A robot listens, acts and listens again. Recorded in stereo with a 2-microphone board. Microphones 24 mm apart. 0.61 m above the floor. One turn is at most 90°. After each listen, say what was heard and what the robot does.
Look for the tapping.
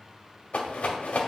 Keep listening.
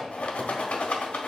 Keep listening.
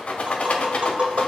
The tapping: about 55° right or 125° right. Turn 55° right.
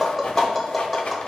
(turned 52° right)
Facing the tapping.